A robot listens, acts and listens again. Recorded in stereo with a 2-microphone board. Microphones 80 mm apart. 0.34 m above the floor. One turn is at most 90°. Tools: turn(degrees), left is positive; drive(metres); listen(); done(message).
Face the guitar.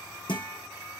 turn(degrees=90)
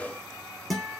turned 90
done("Facing the guitar, 2 to 4 m away.")